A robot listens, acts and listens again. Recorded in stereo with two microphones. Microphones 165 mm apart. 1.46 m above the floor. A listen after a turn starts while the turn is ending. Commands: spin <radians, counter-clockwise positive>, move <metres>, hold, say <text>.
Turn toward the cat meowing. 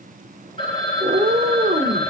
spin -0.79
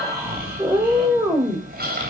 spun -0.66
spin -0.26
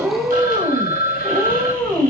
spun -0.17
spin -0.17
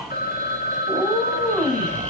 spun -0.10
say Found it: a cat meowing, straight ahead, 2 to 4 m away.